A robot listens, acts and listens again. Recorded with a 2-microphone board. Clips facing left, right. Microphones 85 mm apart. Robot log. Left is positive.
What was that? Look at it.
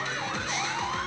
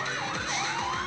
cmd idle
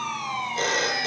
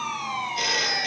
note: The phone ringing: about 30° left or 150° left.
cmd yaw +30
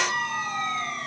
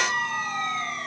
cmd idle
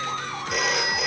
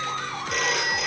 end: Found it: a phone ringing, straight ahead.